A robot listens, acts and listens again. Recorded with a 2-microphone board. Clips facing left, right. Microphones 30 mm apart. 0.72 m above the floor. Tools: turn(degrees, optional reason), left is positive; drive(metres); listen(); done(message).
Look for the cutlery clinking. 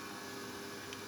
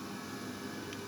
listen()
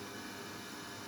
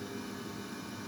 listen()
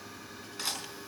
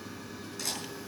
turn(degrees=30, reason="The cutlery clinking: about 30° left or 150° left.")
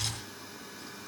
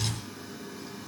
listen()
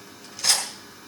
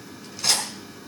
done("Found it: cutlery clinking, straight ahead.")